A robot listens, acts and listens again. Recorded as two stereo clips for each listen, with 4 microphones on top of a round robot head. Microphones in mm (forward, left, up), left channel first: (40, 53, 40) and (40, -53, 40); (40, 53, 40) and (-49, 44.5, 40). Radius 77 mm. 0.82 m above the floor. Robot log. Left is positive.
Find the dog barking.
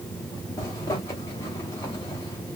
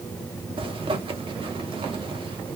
cmd idle
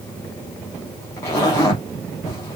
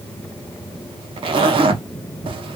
cmd idle
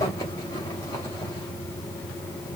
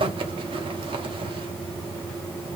end: I can't make out a dog barking to turn to.